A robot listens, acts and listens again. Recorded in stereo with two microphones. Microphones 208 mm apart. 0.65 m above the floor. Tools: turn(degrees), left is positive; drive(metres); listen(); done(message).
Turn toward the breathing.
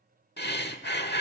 turn(degrees=55)
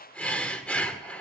done("Facing the breathing, 1 to 2 m away.")